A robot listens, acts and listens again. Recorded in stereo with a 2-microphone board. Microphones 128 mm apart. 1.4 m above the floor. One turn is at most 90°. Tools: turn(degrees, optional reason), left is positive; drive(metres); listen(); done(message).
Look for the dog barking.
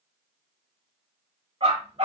turn(degrees=-55, reason="The dog barking: about 55° right or 125° right.")
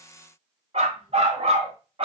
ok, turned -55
turn(degrees=-45, reason="So it is at 45° right.")
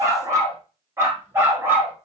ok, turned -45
turn(degrees=-15, reason="The dog barking is now 15° right.")
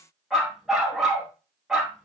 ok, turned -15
done("Facing the dog barking, 2 to 4 m away.")